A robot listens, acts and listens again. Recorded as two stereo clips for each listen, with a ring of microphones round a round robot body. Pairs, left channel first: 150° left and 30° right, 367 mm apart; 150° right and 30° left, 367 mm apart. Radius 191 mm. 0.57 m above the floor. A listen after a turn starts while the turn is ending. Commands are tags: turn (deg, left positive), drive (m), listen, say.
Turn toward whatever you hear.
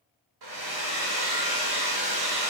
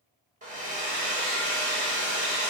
<turn deg="-40"/>
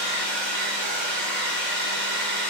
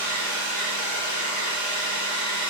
<turn deg="-10"/>
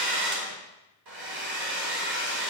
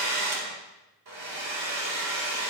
<say>Found it: a hair dryer, straight ahead.</say>